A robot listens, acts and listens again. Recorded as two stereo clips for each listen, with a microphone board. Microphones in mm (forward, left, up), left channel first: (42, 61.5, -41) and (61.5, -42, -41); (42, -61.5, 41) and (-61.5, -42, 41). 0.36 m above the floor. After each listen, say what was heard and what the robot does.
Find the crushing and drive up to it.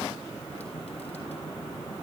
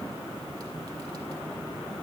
Keep listening.
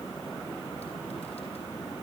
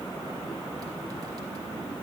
Keep listening.
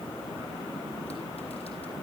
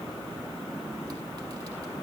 I can't make out crushing to turn to.